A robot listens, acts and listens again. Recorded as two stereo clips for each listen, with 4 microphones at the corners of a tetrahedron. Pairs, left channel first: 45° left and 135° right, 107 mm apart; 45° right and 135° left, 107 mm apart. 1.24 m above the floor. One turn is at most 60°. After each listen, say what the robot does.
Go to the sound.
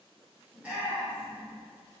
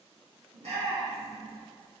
Turn 60° left.
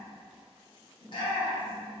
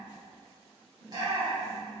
Turn 60° left.
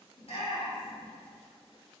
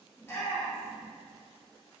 Turn 25° left.
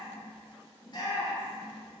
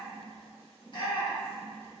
Drive 1.0 m forward.
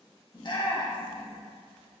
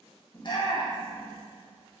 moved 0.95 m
Drive 1.0 m forward.
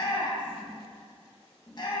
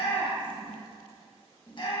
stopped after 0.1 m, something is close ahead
Arrived at the shout, straight ahead.